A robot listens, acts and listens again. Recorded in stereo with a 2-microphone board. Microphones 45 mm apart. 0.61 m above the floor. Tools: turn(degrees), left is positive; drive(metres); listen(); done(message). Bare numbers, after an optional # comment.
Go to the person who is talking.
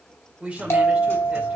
# The woman speaking: about 25° right or 155° right.
turn(-25)
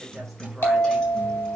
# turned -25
listen()
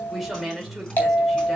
drive(1.0)
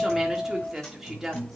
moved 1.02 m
# The woman speaking is now 15° right.
turn(-15)
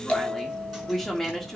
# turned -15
drive(1.0)
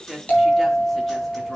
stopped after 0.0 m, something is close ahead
done("Arrived at the woman speaking, straight ahead.")